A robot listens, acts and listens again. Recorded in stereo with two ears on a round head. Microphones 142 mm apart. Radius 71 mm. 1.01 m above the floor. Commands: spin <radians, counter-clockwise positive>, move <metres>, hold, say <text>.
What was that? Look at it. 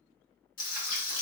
spin 0.96
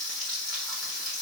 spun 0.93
say Found it: frying, straight ahead.